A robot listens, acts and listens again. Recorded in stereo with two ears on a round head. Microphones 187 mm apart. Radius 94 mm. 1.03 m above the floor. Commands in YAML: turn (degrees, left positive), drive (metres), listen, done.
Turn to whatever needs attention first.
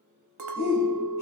turn: 45
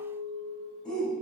done: "Found it: a shout, straight ahead, 2 to 4 m away."